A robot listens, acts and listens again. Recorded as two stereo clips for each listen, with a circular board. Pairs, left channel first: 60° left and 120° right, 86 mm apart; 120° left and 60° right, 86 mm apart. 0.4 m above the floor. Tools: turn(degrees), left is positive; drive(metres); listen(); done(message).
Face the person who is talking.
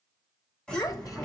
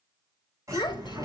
turn(degrees=100)
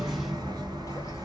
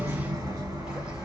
listen()
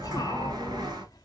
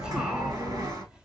listen()
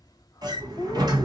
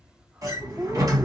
turn(degrees=20)
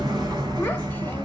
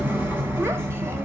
listen()
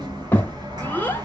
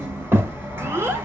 done("Facing the child speaking, 1 to 2 m away.")